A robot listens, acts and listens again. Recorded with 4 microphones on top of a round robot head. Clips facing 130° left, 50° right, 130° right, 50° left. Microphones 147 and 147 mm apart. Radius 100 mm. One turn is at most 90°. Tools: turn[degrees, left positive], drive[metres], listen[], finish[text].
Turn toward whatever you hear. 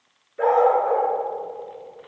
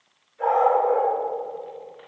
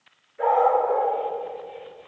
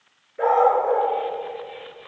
Thought: The dog barking: 95° left.
Action: turn[90]
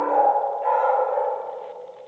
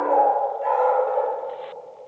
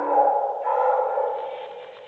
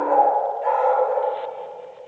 Action: finish[Facing the dog barking, 2 to 4 m away.]